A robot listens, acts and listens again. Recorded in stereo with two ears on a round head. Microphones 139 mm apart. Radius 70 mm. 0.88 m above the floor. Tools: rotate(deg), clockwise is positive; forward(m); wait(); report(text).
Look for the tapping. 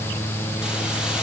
wait()
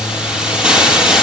wait()
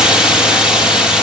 report("I can't make out tapping to turn to.")